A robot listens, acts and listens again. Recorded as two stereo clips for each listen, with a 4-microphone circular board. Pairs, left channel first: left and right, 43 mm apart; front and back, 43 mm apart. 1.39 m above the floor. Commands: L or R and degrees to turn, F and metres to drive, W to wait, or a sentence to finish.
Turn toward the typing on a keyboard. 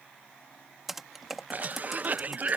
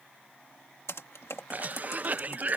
Facing the typing on a keyboard.